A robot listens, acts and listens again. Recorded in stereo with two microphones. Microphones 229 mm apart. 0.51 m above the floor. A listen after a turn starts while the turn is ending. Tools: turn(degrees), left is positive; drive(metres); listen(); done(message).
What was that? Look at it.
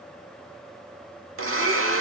turn(degrees=-90)
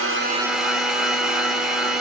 done("Found it: a blender, straight ahead, under 1 m away.")